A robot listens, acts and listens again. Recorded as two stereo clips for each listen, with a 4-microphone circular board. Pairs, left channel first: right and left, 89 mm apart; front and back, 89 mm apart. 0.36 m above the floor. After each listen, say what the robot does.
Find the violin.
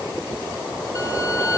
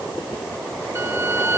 Turn 135° right.
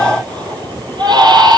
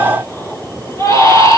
Keep listening.
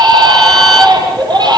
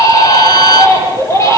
Keep listening.
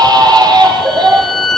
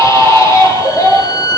Facing the violin.